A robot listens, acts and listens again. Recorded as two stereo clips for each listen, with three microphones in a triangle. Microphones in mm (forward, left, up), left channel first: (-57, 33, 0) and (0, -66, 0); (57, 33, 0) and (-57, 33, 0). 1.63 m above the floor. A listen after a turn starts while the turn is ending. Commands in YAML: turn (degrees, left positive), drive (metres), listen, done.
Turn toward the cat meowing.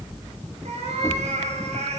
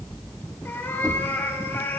turn: -70
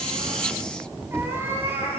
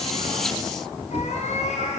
turn: 10
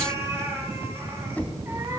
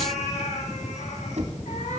turn: 10
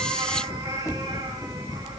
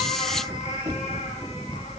done: "Facing the cat meowing, over 4 m away."